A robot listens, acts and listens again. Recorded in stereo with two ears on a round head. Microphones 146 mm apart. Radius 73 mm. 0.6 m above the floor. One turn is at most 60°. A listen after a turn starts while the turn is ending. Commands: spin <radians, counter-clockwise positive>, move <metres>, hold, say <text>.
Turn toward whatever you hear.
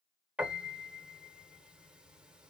spin -0.52
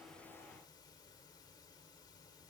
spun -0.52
hold
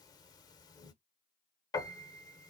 spin 0.44
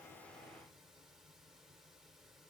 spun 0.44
hold
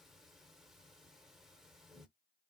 say Facing the piano.